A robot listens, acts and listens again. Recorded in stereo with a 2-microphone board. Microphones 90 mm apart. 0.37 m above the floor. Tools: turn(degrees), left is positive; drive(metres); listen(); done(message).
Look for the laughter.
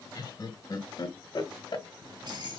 turn(degrees=55)
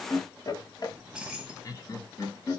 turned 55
turn(degrees=35)
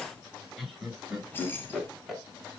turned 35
done("Facing the laughter.")